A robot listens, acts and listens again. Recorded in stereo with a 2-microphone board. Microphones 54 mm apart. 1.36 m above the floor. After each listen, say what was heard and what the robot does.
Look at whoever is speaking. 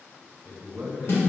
The man speaking: about 45° right or 135° right. Turn 45° right.
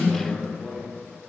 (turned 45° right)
Found it: a man speaking, straight ahead, 1 to 2 m away.